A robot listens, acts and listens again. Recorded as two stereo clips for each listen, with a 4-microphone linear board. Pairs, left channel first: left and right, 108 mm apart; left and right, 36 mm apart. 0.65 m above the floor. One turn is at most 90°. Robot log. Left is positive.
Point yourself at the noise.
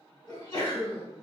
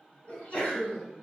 note: The sneeze: about 40° left or 140° left.
cmd yaw +40
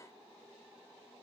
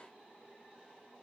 cmd idle
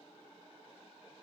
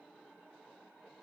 end: I heard a sneeze, but can't make it out now. It was about straight ahead or 100° left.